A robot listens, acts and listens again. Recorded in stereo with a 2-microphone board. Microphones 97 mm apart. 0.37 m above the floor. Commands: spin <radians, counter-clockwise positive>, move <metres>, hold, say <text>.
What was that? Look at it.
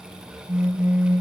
spin -0.52
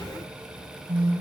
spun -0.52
spin -2.44
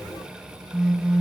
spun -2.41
say Facing the phone buzzing, 2 to 4 m away.